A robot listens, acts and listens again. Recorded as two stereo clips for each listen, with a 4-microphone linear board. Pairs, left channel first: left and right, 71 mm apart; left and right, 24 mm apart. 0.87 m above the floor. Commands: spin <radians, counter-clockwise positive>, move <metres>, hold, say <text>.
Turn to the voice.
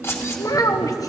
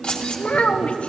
spin 0.96
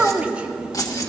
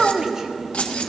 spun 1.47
spin -0.35
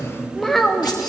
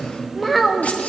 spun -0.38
say Found it: a child speaking, straight ahead, 1 to 2 m away.